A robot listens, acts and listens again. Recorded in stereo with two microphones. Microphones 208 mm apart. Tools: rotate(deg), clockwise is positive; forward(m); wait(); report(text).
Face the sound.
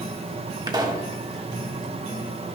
rotate(20)
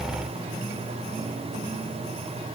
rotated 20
wait()
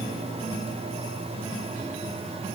report("I heard a pop, but can't make it out now. It was about straight ahead or 140° right.")